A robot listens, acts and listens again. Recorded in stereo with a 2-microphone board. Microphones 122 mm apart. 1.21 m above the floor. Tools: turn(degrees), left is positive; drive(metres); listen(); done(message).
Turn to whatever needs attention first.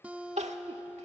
turn(degrees=-70)
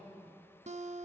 listen()
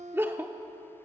turn(degrees=-20)
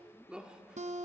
turn(degrees=-10)
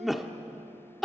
done("Facing the crying.")